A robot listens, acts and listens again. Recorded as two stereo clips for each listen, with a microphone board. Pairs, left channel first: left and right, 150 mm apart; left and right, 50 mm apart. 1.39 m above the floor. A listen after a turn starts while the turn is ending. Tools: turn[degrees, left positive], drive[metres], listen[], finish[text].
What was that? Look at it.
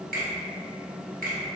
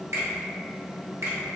Thought: The finger snap: about 70° right or 110° right.
Action: turn[-70]
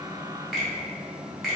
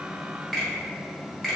Action: finish[Found it: a finger snap, straight ahead, 1 to 2 m away.]